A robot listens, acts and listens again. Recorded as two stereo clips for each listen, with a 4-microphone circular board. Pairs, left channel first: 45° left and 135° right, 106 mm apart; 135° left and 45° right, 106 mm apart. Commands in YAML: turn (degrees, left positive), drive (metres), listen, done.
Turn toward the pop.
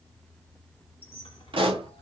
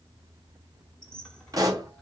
turn: -100
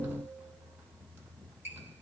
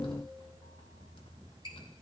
done: "I heard a pop from this way, but can't make it out now."